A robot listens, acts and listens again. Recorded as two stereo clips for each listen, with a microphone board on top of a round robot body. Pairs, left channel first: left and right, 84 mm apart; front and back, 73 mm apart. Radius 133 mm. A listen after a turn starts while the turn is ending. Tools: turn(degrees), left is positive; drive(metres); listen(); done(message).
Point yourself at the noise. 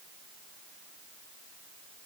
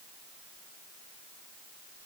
listen()
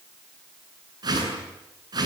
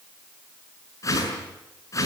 turn(degrees=-45)
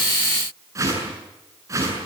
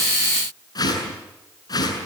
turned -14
turn(degrees=-35)
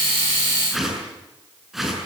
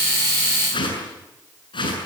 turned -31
done("Facing the whoosh, over 4 m away.")